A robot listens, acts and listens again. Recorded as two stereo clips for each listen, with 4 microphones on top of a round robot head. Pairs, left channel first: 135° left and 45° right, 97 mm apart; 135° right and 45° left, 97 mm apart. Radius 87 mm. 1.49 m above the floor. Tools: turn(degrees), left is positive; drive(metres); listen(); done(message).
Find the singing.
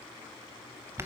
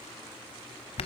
listen()
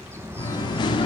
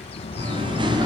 turn(degrees=95)
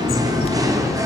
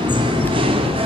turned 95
turn(degrees=15)
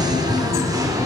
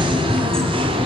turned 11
turn(degrees=10)
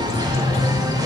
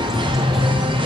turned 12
done("Found it: singing, straight ahead.")